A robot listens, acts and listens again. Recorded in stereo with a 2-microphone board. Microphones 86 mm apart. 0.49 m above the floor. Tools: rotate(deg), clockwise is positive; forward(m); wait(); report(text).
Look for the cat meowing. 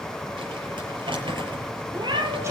rotate(65)
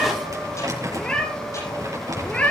rotate(-15)
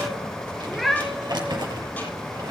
report("Found it: a cat meowing, straight ahead.")